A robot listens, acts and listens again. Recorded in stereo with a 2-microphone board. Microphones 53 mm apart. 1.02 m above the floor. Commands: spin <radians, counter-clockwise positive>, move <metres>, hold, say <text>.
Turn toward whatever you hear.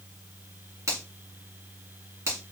spin -1.13
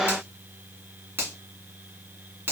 spin -0.79
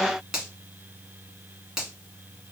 spin -0.26
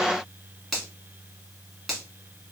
say Found it: a finger snap, straight ahead, 1 to 2 m away.